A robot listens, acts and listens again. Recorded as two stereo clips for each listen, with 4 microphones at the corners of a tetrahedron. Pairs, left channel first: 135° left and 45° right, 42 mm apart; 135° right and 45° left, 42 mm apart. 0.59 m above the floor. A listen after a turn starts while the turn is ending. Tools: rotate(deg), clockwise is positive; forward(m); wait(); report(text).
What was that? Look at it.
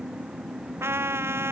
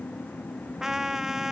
rotate(35)
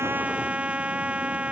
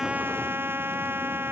rotate(-15)
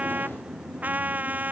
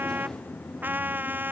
report("Facing the trumpet.")